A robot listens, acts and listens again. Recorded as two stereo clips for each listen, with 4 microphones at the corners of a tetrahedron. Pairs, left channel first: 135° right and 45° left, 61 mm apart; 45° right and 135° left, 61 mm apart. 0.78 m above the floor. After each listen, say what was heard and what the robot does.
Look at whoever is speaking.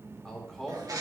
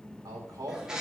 The man speaking: 140° left. Turn 140° left.
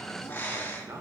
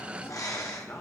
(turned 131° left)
The man speaking is now 10° left. Turn 10° left.
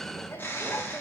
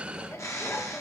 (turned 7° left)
Keep listening.
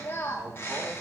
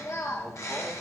Keep listening.
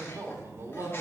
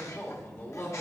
Found it: a man speaking, straight ahead.